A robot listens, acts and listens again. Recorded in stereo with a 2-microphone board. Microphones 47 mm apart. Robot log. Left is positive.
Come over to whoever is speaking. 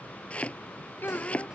note: The child speaking: about 45° left or 135° left.
cmd yaw +45
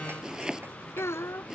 note: So it is at 90° left.
cmd yaw +90
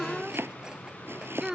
note: The child speaking is now 15° right.
cmd yaw -15
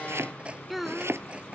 cmd fwd 1.0
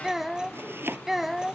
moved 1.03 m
cmd fwd 1.0
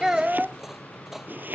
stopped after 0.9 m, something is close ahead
note: The child speaking is now 20° right.
cmd yaw -20
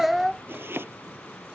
end: I am next to the child speaking.